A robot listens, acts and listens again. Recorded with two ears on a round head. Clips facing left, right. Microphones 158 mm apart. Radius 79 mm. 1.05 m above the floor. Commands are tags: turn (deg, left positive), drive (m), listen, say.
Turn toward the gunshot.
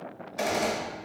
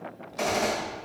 <turn deg="30"/>
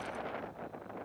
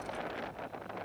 <listen/>
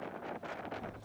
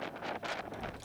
<say>I heard a gunshot, but can't make it out now. It was about 20° right or 140° left.</say>